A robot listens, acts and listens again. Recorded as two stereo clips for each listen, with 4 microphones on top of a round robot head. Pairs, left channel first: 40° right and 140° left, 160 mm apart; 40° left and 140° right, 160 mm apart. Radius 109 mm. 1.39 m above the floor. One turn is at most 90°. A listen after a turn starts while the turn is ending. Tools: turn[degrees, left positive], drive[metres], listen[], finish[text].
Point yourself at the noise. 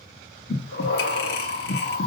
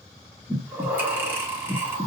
Thought: The breathing: 60° right.
Action: turn[-60]
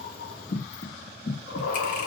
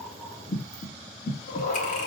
Action: finish[Facing the breathing, 1 to 2 m away.]